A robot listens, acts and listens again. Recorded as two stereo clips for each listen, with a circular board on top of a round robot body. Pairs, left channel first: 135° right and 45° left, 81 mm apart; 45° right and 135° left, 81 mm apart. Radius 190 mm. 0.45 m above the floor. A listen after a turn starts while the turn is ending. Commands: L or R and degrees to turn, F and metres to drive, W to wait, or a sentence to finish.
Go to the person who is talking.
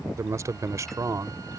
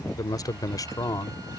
F1.0
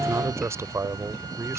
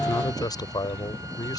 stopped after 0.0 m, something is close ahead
R10
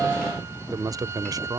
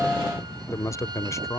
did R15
Blocked. The man speaking is further on, straight ahead.